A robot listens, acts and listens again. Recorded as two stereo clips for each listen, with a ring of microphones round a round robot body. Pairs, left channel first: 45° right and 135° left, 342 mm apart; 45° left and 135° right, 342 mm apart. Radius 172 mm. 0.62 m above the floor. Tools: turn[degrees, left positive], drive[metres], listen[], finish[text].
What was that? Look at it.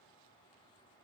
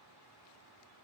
Action: listen[]
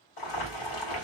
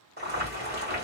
Thought: The boiling: 70° right.
Action: turn[-70]
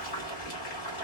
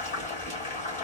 Thought: The boiling is now 25° right.
Action: turn[-25]
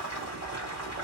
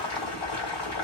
Action: finish[Found it: boiling, straight ahead.]